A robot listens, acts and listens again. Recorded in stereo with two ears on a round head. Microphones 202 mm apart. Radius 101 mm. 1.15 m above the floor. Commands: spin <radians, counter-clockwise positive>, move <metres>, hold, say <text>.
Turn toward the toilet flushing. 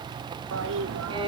spin -1.05
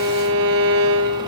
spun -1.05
hold
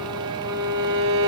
hold
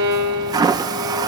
spin -0.35
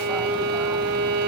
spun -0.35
hold
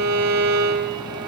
hold
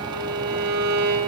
say I heard a toilet flushing from this way, but can't make it out now.